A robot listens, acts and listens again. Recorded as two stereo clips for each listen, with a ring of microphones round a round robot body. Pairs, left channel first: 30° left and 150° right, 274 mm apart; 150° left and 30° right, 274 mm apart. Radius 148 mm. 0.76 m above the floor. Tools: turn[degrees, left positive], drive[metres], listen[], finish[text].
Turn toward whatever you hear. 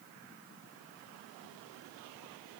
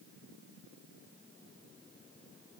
Action: listen[]
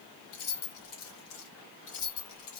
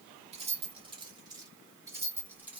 Thought: The keys jangling: 55° left.
Action: turn[55]
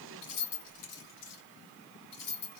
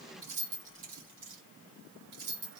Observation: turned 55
Thought: The keys jangling is now 20° left.
Action: turn[20]
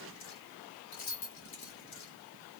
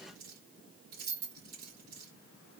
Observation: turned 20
Thought: The keys jangling is now 10° left.
Action: turn[10]
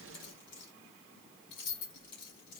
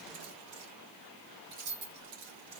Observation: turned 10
Action: finish[Facing the keys jangling, 2 to 4 m away.]